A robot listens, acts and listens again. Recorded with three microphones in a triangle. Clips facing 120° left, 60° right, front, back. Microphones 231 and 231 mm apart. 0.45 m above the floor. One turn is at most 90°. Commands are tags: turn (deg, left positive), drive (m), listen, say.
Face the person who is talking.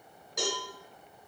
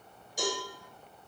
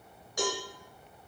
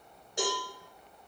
<listen/>
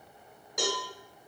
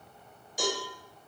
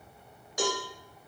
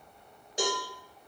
<listen/>
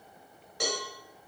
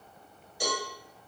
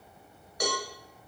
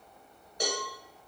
<say>I can't make out anyone speaking, only a cowbell.</say>